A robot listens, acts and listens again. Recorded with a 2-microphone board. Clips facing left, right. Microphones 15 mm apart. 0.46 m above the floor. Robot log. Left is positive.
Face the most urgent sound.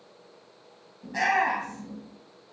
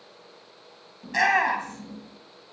note: The shout: about 65° right or 115° right.
cmd yaw -65
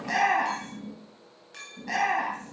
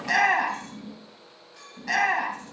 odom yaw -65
note: So it is at 45° right.
cmd yaw -45
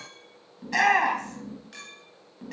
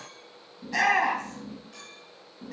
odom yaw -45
note: The shout is now 25° left.
cmd yaw +25
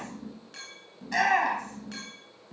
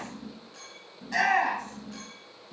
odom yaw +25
note: The shout is now 10° left.
cmd yaw +10
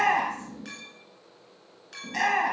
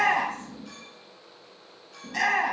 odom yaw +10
end: Facing the shout.